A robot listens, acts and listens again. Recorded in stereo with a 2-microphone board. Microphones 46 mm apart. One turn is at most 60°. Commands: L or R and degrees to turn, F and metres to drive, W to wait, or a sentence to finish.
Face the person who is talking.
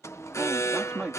R20
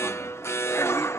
W
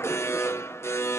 W
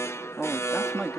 Facing the man speaking.